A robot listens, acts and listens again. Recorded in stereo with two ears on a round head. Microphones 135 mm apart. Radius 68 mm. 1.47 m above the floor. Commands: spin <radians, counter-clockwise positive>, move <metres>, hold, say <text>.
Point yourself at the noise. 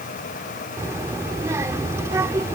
spin -0.35
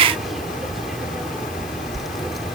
say Found it: a child speaking, straight ahead.